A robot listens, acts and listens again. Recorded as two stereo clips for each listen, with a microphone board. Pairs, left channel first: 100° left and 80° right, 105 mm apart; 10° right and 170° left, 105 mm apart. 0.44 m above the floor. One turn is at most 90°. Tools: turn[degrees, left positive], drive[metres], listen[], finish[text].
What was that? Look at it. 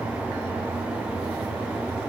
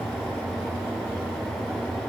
Action: listen[]
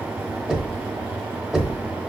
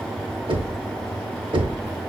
Thought: The knocking: 160° right.
Action: turn[-90]
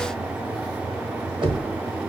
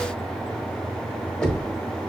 Thought: The knocking is now 90° right.
Action: turn[-90]
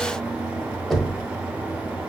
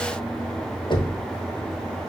Thought: The knocking is now 10° left.
Action: turn[10]
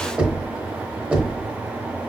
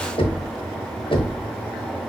Action: finish[Found it: knocking, straight ahead, under 1 m away.]